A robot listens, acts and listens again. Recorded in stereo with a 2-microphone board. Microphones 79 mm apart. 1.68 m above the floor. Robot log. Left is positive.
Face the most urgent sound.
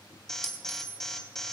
cmd yaw +30
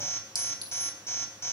note: So it is at 145° left.
cmd yaw +145
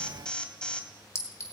note: The alarm is now 15° left.
cmd yaw +15
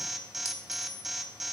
end: Facing the alarm.